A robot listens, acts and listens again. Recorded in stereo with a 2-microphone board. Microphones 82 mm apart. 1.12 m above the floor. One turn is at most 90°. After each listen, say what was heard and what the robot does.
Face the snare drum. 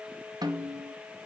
The snare drum: about 60° right or 120° right. Turn 60° right.
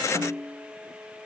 So it is at 60° right. Turn 60° right.
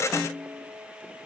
The snare drum is now 10° right. Turn 10° right.
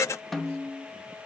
Facing the snare drum.